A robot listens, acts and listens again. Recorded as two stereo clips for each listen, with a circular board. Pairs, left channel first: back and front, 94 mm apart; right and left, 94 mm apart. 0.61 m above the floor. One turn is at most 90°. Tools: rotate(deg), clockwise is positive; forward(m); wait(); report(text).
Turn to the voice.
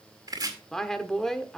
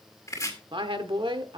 rotate(-90)
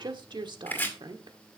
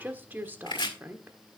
rotate(-25)
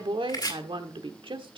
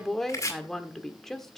report("Facing the woman speaking.")